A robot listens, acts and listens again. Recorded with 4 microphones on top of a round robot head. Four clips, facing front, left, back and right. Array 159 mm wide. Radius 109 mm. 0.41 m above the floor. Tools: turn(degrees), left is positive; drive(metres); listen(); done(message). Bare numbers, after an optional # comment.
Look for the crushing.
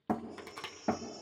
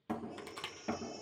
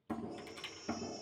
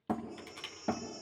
# The crushing: 30° left.
turn(30)
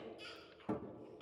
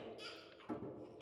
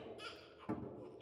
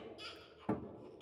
# The crushing is now 10° right.
turn(-10)
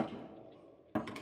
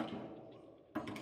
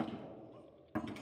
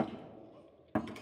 listen()
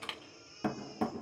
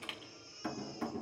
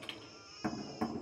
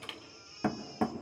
done("Facing the crushing, 1 to 2 m away.")